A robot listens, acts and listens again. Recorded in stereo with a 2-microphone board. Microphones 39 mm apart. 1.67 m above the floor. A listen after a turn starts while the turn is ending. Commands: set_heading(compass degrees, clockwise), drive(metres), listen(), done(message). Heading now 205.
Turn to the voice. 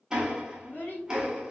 set_heading(155)
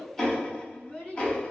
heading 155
set_heading(125)
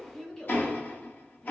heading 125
set_heading(105)
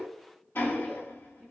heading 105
set_heading(70)
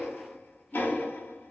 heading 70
listen()
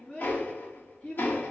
set_heading(55)
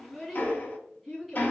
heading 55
done("Facing the child speaking, 1 to 2 m away.")